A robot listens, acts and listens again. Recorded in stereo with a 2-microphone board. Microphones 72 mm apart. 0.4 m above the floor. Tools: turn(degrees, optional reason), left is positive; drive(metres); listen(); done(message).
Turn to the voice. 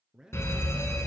turn(degrees=-30)
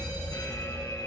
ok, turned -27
listen()
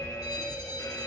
listen()
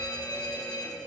done("I heard a man speaking, but can't make it out now. It was about 15° left or 140° right.")